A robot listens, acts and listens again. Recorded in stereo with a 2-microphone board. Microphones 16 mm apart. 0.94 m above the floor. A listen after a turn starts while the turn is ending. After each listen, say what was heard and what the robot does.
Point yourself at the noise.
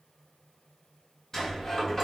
The sliding door: about 25° left or 155° left. Turn 25° left.
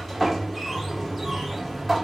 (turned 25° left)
Found it: a sliding door, straight ahead, 1 to 2 m away.